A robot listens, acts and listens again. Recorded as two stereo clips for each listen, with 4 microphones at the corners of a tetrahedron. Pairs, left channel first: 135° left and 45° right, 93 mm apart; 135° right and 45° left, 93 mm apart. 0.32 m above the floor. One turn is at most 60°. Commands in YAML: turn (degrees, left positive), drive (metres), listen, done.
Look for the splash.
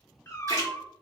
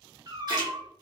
done: "Facing the splash, 1 to 2 m away."